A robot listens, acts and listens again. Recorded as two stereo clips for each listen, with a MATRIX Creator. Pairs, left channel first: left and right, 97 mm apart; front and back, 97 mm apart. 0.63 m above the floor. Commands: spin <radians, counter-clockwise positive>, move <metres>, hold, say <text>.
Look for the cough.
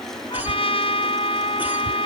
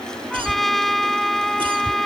spin -2.79
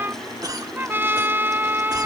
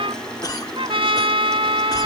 spin -0.79
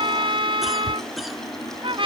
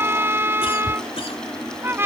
say Found it: a cough, straight ahead.